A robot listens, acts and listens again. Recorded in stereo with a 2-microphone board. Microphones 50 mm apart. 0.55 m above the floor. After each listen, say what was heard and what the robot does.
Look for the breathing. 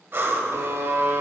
The breathing: about 50° right or 130° right. Turn 50° right.
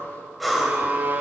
Facing the breathing.